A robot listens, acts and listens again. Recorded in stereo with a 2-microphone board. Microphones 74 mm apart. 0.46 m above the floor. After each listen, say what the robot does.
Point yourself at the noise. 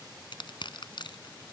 Turn 90° left.
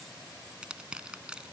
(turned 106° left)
Turn 15° right.
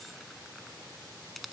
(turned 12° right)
Facing the crushing.